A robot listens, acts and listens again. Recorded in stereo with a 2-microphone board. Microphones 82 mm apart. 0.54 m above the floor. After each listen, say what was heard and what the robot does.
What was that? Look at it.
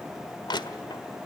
The crushing: about 65° left or 115° left. Turn 65° left.
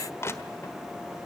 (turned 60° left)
So it is at 35° left. Turn 35° left.
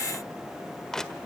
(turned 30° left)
Facing the crushing.